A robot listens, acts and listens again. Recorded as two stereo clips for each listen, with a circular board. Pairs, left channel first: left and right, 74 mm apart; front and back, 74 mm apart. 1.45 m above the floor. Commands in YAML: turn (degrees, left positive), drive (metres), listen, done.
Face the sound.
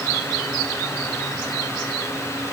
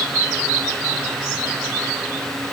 listen: true
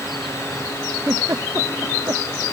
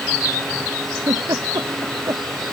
turn: -140
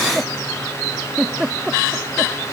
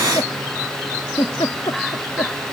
turn: -10
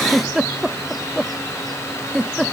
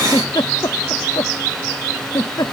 done: "Found it: a giggle, straight ahead."